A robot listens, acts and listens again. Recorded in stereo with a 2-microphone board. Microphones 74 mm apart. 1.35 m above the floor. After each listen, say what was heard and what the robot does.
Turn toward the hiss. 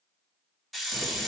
Turn 30° left.
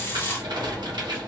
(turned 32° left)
So it is at 150° left. Turn 150° left.
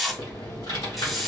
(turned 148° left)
Found it: a hiss, straight ahead.